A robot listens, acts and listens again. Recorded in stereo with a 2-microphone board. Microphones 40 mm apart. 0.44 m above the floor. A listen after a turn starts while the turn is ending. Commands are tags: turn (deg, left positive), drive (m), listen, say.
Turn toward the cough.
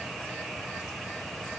<listen/>
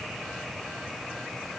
<listen/>
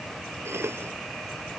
<turn deg="-90"/>
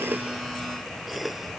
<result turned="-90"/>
<say>Found it: a cough, straight ahead.</say>